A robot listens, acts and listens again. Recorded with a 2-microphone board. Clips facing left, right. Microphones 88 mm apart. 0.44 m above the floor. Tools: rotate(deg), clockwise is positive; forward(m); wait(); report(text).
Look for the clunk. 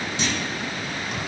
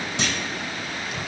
rotate(65)
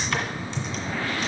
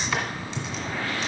wait()
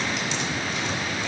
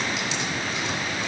report("I heard a clunk, but can't make it out now. It was about straight ahead or 50° right.")